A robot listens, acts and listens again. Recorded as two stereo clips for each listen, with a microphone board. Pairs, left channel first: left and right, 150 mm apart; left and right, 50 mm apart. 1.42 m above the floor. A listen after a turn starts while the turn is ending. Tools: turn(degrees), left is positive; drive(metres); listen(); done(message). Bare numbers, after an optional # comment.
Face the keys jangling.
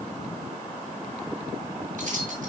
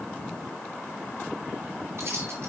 # The keys jangling: about 65° right or 115° right.
turn(-65)
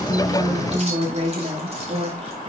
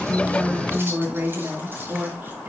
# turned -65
# So it is at 45° right.
turn(-45)
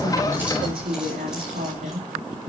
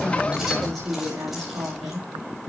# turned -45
done("Found it: keys jangling, straight ahead, over 4 m away.")